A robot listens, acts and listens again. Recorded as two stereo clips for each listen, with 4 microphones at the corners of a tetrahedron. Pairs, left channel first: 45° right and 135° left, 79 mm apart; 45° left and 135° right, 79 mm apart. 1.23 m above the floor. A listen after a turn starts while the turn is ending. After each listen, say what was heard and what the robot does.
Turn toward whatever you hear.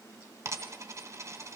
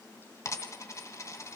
The dropped coin: 90° left. Turn 90° left.
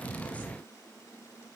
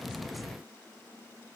I heard a dropped coin from this way, but can't make it out now.